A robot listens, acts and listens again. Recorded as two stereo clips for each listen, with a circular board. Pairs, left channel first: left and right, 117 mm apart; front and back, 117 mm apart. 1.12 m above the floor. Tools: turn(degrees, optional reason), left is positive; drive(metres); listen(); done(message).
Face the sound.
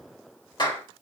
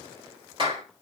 turn(degrees=140, reason="The clap: 140° left.")
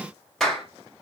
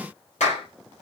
done("Found it: a clap, straight ahead, 2 to 4 m away.")